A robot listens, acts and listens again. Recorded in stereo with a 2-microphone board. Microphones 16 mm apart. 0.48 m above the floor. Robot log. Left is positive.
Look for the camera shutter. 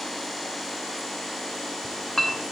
cmd idle
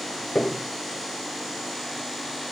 cmd idle
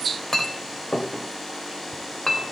end: I can't make out a camera shutter to turn to.